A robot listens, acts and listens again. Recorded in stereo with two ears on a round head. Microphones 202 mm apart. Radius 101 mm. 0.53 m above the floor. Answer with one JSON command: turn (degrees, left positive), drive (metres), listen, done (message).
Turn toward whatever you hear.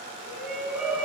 {"turn": -30}
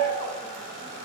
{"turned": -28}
{"turn": 25}
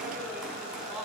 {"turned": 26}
{"done": "Found it: a shout, straight ahead, over 4 m away."}